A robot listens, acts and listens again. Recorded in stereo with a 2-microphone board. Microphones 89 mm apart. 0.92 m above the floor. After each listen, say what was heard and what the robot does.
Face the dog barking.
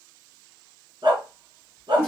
The dog barking: about 60° right or 120° right. Turn 60° right.
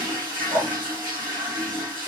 So it is at 55° right. Turn 55° right.
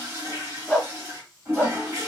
Found it: a dog barking, straight ahead.